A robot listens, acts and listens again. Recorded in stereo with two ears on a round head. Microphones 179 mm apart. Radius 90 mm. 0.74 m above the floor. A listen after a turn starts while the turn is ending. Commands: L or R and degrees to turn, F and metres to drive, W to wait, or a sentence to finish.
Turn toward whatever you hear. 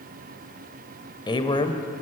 L25
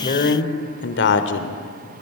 L115
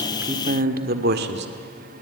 R55
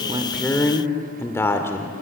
L10
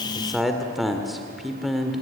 Facing the man speaking, 1 to 2 m away.